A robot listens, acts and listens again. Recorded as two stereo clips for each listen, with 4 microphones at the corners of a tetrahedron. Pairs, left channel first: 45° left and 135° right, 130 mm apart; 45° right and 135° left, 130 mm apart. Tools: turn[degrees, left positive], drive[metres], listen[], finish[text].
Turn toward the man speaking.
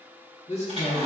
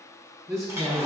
Thought: The man speaking: 75° left.
Action: turn[75]
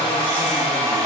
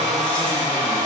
Action: listen[]
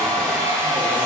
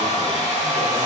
Action: listen[]
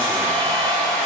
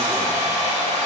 Action: finish[Facing where the man speaking came from. I can't hear it now.]